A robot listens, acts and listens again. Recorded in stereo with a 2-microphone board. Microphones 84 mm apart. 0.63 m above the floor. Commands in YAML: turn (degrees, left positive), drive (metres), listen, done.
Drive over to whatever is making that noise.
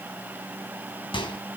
turn: 90
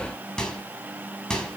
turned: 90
drive: 1.0
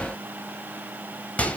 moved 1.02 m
turn: 15
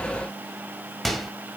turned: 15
drive: 1.0
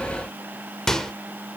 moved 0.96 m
drive: 1.0
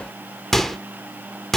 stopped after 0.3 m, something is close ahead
done: "Arrived at the microwave, straight ahead."